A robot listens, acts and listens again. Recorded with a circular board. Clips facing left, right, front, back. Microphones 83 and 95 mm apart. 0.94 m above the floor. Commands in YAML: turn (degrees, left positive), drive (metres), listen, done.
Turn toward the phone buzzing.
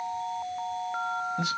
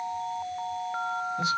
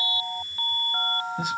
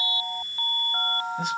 listen: true
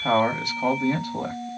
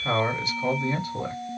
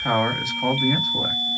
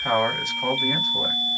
listen: true
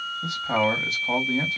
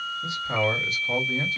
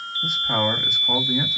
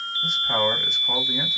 done: "I can't make out a phone buzzing, only a man speaking."